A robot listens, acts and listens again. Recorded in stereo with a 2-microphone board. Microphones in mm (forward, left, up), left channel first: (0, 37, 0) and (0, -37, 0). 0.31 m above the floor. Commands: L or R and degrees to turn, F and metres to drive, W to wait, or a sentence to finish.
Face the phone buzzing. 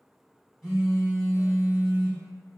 R30
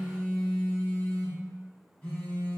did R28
L20
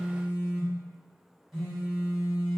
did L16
Found it: a phone buzzing, straight ahead, 1 to 2 m away.